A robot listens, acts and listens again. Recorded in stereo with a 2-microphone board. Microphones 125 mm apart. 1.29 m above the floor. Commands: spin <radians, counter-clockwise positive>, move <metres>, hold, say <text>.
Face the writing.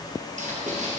spin -1.57
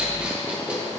spin -0.17
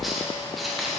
say Found it: writing, straight ahead.